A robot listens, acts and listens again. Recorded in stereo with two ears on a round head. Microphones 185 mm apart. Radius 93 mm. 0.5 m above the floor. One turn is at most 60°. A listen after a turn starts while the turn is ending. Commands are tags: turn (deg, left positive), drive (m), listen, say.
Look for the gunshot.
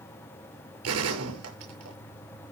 <turn deg="-60"/>
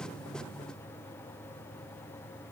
<turn deg="-30"/>
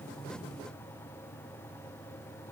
<say>I heard a gunshot from this way, but can't make it out now.</say>